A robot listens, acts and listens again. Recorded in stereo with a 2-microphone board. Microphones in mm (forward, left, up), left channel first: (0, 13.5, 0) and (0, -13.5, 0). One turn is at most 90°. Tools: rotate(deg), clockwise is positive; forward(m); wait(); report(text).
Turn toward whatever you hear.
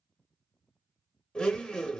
rotate(-35)
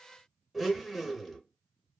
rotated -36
report("Found it: a blender, straight ahead, under 1 m away.")